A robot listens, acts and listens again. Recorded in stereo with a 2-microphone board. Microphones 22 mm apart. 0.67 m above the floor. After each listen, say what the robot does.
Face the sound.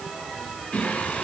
Turn 75° left.
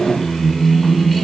Found it: singing, straight ahead.